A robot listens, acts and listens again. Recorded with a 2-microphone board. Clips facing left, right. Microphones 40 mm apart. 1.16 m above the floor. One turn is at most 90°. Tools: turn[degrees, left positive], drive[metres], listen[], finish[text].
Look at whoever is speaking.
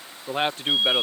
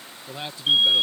Thought: The man speaking: about 55° left or 125° left.
Action: turn[55]
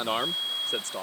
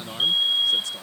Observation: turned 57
Thought: So it is at 55° left.
Action: turn[55]
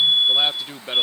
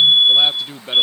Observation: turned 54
Action: finish[Facing the man speaking.]